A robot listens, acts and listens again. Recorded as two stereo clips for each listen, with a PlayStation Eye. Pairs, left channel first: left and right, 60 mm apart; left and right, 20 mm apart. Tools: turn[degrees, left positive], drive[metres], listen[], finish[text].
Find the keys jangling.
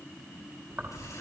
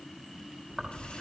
Thought: The keys jangling: about 55° right or 125° right.
Action: turn[-55]
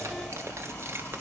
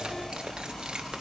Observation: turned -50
Thought: So it is at 40° right.
Action: turn[-40]
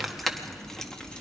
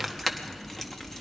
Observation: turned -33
Thought: The keys jangling is now 15° left.
Action: turn[15]
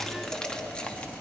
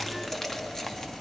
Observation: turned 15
Thought: The keys jangling is now 20° left.
Action: turn[20]
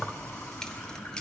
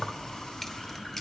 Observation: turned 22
Thought: The keys jangling is now 15° left.
Action: turn[15]
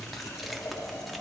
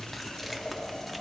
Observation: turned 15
Action: finish[Facing the keys jangling, 1 to 2 m away.]